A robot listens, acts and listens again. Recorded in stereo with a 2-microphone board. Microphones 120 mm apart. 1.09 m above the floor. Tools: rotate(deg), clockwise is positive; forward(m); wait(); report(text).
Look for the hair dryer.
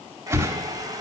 rotate(30)
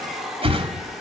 report("Facing the hair dryer.")